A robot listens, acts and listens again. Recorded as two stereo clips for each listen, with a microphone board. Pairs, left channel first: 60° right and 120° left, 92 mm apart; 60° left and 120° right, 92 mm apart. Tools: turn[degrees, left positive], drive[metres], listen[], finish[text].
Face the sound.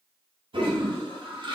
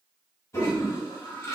Thought: The toilet flushing: 120° left.
Action: turn[120]
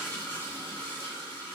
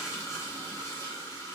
Action: finish[Facing the toilet flushing.]